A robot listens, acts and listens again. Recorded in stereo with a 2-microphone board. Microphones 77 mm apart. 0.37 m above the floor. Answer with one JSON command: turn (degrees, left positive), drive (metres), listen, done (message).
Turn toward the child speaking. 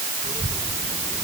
{"turn": 50}
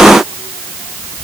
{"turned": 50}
{"turn": 85}
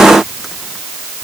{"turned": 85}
{"listen": true}
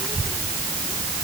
{"done": "Found it: a child speaking, straight ahead."}